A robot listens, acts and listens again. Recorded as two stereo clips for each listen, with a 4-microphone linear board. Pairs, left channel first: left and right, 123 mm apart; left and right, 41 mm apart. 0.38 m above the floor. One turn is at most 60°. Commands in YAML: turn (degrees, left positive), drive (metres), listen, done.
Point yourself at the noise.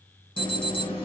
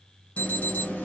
turn: 45
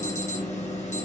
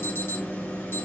turn: 60
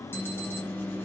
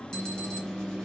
turn: 20
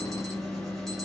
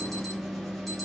done: "Facing the alarm, 2 to 4 m away."